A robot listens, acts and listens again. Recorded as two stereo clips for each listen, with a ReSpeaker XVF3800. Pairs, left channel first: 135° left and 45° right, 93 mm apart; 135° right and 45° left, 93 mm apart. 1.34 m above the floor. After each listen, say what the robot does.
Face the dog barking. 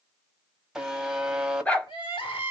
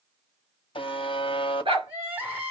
Turn 65° left.
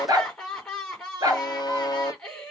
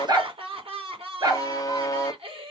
Found it: a dog barking, straight ahead.